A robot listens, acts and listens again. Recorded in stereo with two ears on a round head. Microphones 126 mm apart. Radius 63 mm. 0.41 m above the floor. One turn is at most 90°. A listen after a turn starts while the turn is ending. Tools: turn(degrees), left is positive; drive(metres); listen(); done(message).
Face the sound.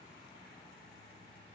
listen()
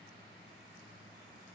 listen()
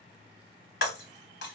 turn(degrees=90)
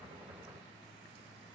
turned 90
done("Facing where the breaking glass came from. I can't hear it now.")